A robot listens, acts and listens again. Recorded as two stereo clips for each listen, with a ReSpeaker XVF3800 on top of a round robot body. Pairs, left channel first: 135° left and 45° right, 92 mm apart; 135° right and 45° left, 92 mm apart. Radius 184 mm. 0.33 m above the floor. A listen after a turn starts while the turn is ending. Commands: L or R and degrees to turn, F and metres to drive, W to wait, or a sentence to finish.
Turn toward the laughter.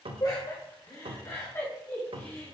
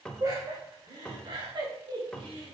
L65
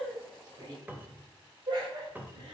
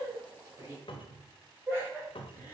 R25
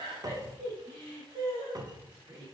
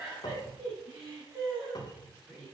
R25
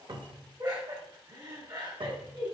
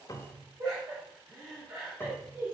Found it: laughter, straight ahead, 2 to 4 m away.